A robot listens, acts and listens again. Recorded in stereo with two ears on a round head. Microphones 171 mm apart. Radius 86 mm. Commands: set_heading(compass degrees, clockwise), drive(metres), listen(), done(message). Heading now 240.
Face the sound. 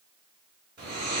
set_heading(265)
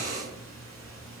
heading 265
done("Facing the snoring.")